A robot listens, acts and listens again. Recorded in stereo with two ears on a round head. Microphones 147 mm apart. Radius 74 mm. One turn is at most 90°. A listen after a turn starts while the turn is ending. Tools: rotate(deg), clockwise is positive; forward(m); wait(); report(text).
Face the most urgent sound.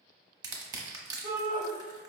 rotate(60)
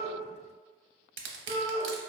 rotate(50)
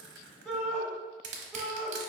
report("Facing the shout.")